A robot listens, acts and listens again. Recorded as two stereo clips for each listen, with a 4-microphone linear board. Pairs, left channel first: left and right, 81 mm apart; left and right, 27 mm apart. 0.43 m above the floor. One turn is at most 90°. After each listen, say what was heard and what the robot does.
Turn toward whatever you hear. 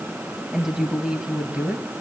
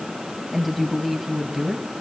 Turn 30° right.
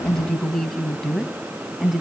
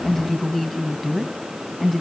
Turn 30° left.
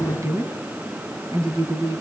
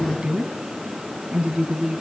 So it is at 45° right. Turn 45° right.
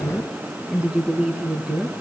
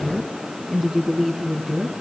The woman speaking is now 15° right. Turn 15° right.
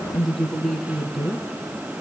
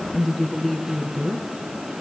Found it: a woman speaking, straight ahead, over 4 m away.